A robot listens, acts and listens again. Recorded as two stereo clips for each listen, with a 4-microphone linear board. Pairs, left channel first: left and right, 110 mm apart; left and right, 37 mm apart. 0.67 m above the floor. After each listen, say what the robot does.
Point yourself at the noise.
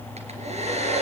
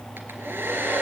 Turn 70° right.
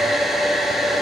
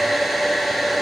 Found it: a hair dryer, straight ahead, 2 to 4 m away.